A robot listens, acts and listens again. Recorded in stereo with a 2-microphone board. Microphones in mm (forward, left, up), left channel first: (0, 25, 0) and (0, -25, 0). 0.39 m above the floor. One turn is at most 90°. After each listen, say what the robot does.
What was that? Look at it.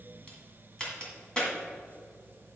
Turn 20° left.
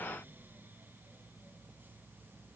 Keep listening.
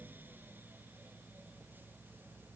I heard a crack, but can't make it out now. It was about straight ahead or 140° left.